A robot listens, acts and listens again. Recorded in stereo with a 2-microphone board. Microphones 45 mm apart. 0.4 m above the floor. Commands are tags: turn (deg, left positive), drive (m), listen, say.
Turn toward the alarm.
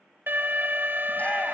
<turn deg="-60"/>
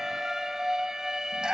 <turn deg="-15"/>
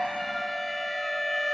<say>Facing the alarm.</say>